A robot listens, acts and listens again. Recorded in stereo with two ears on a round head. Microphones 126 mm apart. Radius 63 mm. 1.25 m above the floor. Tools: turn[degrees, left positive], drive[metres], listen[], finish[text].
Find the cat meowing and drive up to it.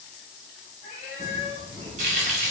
Thought: The cat meowing: about 50° left or 130° left.
Action: turn[50]
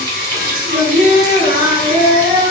Action: listen[]
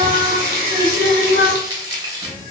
Action: listen[]
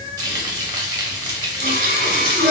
Thought: So it is at 20° left.
Action: turn[20]
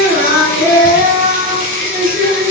Action: listen[]
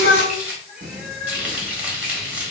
Action: drive[1.0]
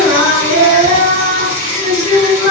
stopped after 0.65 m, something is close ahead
Action: listen[]
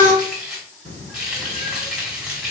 Action: listen[]
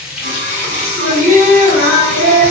Action: finish[Facing where the cat meowing came from. I can't hear it now. I did not reach it.]